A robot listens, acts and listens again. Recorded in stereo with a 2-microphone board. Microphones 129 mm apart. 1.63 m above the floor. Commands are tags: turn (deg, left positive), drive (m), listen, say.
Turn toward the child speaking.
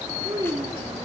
<turn deg="-35"/>
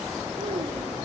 <listen/>
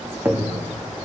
<listen/>
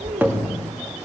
<turn deg="-105"/>
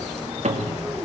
<listen/>
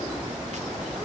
<listen/>
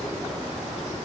<say>I heard a child speaking from this way, but can't make it out now.</say>